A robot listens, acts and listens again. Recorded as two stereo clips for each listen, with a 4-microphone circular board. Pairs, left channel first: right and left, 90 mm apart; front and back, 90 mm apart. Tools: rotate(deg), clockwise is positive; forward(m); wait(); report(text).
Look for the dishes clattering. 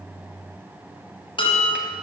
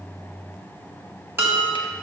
rotate(115)
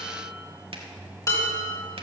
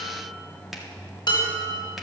rotate(40)
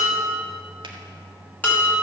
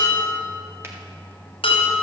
rotate(15)
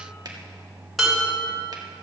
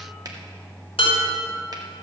report("Found it: dishes clattering, straight ahead.")